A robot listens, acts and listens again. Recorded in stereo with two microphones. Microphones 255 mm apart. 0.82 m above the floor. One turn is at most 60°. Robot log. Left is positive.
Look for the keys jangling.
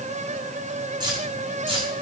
note: The keys jangling: about 20° right or 160° right.
cmd yaw -20
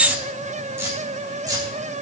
cmd yaw -30
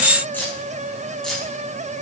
end: Found it: keys jangling, straight ahead.